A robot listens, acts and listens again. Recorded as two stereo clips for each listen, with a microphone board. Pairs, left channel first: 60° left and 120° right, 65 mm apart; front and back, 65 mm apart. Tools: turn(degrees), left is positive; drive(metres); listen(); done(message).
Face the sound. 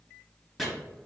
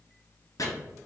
turn(degrees=-25)
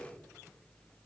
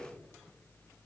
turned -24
listen()
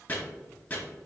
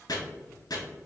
done("Found it: chopping, straight ahead, 1 to 2 m away.")